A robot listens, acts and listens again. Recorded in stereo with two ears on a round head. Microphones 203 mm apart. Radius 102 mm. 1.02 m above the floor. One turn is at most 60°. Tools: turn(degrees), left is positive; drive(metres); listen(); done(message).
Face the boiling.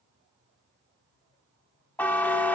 listen()
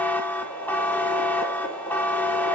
turn(degrees=25)
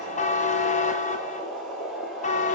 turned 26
done("Found it: boiling, straight ahead, 2 to 4 m away.")